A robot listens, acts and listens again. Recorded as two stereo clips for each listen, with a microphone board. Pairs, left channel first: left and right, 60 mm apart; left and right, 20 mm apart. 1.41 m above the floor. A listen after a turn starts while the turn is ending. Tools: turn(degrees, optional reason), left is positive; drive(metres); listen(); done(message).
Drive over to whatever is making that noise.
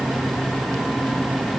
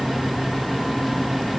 listen()
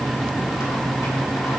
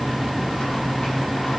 listen()
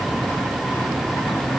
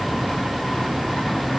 done("I can't make out anything to turn to.")